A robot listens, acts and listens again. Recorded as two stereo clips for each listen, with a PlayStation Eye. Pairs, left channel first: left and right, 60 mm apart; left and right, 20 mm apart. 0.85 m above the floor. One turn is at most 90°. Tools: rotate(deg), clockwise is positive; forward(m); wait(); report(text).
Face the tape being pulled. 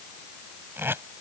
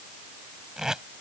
rotate(40)
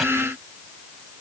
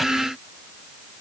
wait()
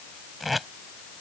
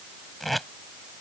report("Facing the tape being pulled.")